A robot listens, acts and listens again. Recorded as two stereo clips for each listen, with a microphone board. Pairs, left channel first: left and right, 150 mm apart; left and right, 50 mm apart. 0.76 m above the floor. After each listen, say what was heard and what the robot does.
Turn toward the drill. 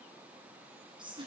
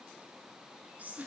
Keep listening.
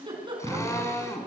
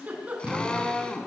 The drill: about 20° left or 160° left. Turn 20° left.
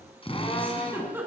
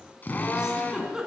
So it is at 140° left. Turn 140° left.
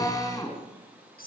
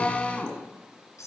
The drill is now 25° left. Turn 25° left.
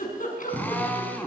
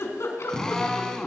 The drill is now 10° left. Turn 10° left.
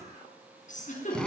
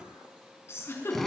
Found it: a drill, straight ahead.